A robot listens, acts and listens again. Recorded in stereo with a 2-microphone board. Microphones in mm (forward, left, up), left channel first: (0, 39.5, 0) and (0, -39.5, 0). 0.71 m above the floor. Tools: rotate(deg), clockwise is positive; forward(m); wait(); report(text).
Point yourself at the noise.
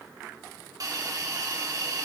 rotate(50)
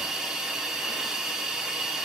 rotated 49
report("Facing the hiss, 1 to 2 m away.")